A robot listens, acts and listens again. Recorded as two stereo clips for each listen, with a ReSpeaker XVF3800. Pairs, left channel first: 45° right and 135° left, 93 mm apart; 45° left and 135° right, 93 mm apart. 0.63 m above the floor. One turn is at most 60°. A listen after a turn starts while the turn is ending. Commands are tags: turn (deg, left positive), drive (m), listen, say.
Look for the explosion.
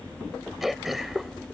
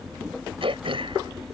<listen/>
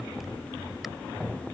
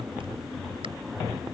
<listen/>
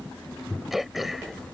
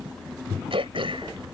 <say>I can't make out an explosion, only throat clearing.</say>